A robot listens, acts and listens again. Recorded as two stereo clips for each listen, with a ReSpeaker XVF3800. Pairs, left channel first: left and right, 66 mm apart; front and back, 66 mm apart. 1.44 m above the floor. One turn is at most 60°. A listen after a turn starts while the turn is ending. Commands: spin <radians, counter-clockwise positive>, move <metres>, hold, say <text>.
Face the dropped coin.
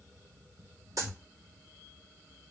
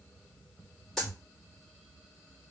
spin -1.05
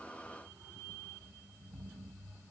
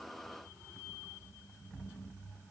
spin -0.44
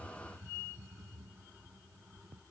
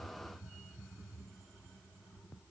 say I heard a dropped coin from this way, but can't make it out now.